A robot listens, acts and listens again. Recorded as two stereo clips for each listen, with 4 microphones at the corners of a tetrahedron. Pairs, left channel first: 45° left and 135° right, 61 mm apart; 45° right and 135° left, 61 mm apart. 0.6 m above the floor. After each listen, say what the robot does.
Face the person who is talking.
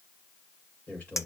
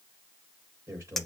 Turn 110° left.
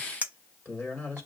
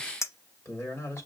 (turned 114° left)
Facing the man speaking, 2 to 4 m away.